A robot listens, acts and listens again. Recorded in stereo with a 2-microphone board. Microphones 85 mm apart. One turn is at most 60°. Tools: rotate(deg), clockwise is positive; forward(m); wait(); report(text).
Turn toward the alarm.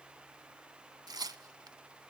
wait()
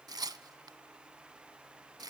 wait()
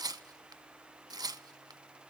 report("I can't make out an alarm, only tearing paper.")